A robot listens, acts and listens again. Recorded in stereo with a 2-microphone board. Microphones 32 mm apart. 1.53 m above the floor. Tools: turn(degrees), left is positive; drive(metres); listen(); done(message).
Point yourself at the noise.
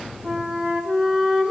turn(degrees=-20)
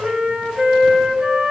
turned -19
turn(degrees=-140)
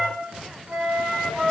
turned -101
turn(degrees=-45)
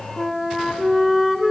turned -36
done("Facing the flute.")